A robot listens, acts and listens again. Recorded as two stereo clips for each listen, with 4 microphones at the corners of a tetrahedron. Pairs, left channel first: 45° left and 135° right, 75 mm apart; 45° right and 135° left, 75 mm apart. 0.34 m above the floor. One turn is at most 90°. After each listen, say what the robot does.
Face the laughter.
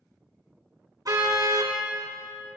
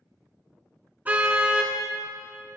Keep listening.
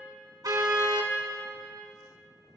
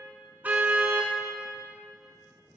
Keep listening.
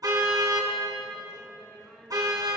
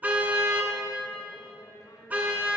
Turn 35° right.
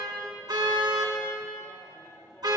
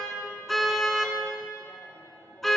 Turn 10° right.
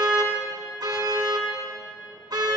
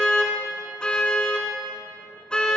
Keep listening.
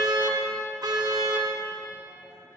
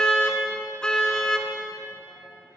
Keep listening.
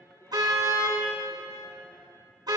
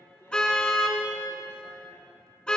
Found it: laughter, straight ahead.